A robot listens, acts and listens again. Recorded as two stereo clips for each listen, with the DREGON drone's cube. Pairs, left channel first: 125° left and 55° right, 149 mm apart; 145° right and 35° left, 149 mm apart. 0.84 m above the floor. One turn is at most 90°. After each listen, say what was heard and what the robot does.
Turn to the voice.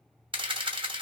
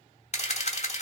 Keep listening.
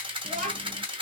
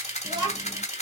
The child speaking: 25° right. Turn 25° right.
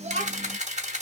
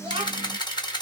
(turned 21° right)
The child speaking is now 20° right. Turn 20° right.
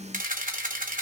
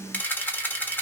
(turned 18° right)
The child speaking is now 20° right. Turn 20° right.
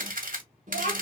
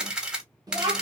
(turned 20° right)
The child speaking is now 30° right. Turn 30° right.
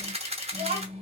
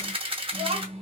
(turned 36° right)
The child speaking is now 10° right. Turn 10° right.
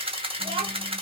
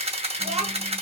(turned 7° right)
Found it: a child speaking, straight ahead, 1 to 2 m away.